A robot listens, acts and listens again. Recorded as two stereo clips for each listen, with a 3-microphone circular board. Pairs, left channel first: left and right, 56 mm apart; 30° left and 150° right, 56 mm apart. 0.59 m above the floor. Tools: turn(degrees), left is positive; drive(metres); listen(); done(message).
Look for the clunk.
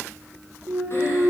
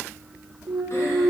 turn(degrees=-140)
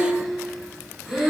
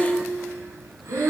done("Facing where the clunk came from. I can't hear it now.")